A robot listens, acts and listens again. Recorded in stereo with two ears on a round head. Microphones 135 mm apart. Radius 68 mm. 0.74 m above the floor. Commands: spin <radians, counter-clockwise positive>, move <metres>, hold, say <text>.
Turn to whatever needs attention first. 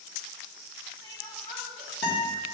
hold
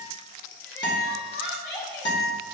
spin 0.44
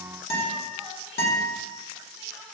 hold
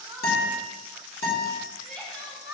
say Found it: crying, straight ahead, 2 to 4 m away.